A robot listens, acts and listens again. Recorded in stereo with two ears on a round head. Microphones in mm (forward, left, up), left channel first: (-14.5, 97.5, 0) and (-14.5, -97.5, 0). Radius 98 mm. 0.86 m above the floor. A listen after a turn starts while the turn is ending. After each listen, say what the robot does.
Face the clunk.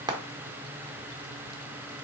Keep listening.
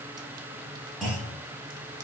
Turn 30° left.
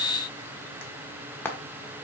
Keep listening.
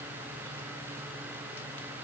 I heard a clunk, but can't make it out now. It was about 30° right or 150° left.